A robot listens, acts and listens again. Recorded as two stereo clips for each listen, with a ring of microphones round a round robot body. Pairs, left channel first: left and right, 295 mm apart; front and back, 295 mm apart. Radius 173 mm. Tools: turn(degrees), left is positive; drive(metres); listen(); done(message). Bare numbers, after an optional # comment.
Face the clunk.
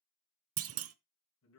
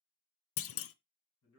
# The clunk: 45° right.
turn(-45)
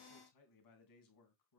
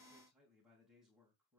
done("I heard a clunk from this way, but can't make it out now.")